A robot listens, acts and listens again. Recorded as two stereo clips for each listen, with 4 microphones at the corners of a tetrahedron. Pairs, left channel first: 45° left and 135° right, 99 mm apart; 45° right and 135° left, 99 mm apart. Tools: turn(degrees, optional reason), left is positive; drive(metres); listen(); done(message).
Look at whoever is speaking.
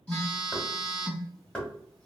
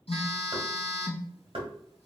listen()
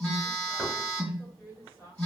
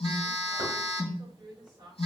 turn(degrees=90, reason="The woman speaking: 90° left.")
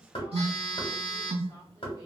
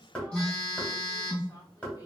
listen()
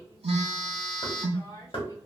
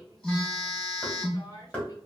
done("Facing the woman speaking, 1 to 2 m away.")